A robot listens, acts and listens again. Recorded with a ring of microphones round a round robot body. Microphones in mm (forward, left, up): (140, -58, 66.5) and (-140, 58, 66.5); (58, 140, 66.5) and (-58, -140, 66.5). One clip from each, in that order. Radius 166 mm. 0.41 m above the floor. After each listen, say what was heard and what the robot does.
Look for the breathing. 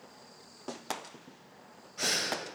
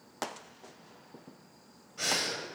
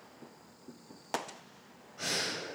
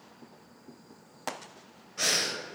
The breathing: 100° right. Turn 100° right.
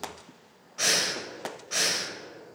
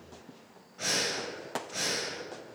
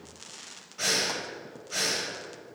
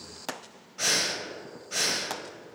The breathing is now 25° right. Turn 25° right.
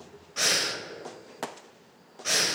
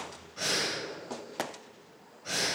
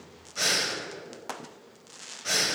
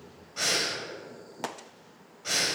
The breathing is now 10° right. Turn 10° right.
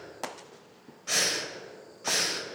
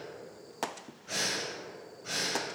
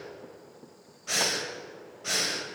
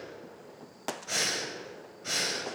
Facing the breathing.